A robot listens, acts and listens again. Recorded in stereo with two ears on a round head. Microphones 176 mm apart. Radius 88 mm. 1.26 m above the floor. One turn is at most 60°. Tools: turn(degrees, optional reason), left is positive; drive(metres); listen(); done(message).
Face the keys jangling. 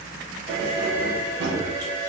turn(degrees=-55, reason="The keys jangling: about 55° right or 125° right.")
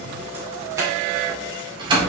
turn(degrees=-25, reason="So it is at 25° right.")
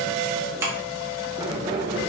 turn(degrees=-25, reason="The keys jangling is now 25° right.")
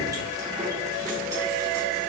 listen()
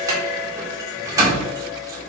turn(degrees=-15, reason="The keys jangling is now 15° right.")
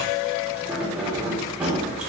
done("Facing the keys jangling.")